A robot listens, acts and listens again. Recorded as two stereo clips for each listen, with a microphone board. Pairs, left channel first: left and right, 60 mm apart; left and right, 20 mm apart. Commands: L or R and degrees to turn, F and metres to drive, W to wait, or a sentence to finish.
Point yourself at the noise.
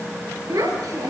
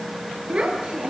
R90
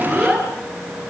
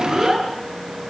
L10
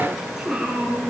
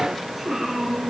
Facing the child speaking, over 4 m away.